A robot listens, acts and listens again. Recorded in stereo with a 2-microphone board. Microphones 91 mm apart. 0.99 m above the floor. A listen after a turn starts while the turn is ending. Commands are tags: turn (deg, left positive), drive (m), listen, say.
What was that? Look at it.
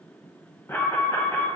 <turn deg="30"/>
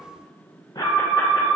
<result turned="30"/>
<turn deg="115"/>
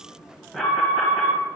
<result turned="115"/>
<say>Found it: an alarm, straight ahead.</say>